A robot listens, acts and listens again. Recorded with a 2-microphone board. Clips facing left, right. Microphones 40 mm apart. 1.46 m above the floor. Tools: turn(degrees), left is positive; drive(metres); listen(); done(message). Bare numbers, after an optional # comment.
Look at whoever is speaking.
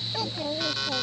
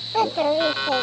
# The child speaking: about 55° right or 125° right.
turn(-55)
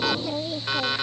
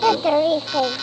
# So it is at 70° right.
turn(-70)
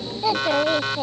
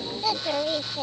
# The child speaking is now 15° left.
turn(15)
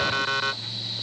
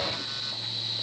listen()
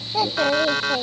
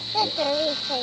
done("Facing the child speaking.")